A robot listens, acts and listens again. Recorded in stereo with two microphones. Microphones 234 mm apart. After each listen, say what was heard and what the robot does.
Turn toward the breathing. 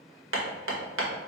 Keep listening.
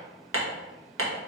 Keep listening.
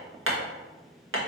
I can't make out breathing to turn to.